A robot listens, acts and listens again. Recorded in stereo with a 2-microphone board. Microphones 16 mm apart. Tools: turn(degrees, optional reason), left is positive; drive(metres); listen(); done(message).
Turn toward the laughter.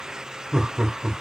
turn(degrees=-40, reason="The laughter: about 40° right or 140° right.")
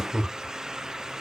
turn(degrees=-10, reason="So it is at 10° right.")
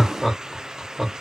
done("Facing the laughter.")